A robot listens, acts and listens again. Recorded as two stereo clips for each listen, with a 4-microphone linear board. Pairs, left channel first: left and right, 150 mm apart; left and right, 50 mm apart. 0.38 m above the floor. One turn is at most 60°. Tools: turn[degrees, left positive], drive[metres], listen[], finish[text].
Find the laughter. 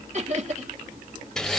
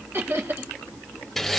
Thought: The laughter: about 55° right or 125° right.
Action: turn[-55]
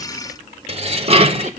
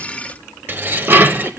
Action: listen[]
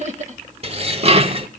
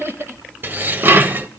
Thought: So it is at 60° right.
Action: turn[-60]
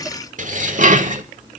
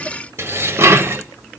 Action: listen[]
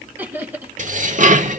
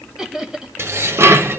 Thought: The laughter is now 15° right.
Action: turn[-15]
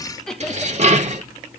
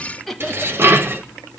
Action: finish[Facing the laughter, 1 to 2 m away.]